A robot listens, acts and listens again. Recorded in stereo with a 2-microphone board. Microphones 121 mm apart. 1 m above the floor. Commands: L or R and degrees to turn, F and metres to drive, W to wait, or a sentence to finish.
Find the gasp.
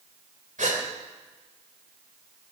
R90
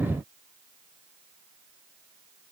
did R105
L15
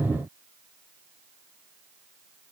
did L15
I heard a gasp from this way, but can't make it out now.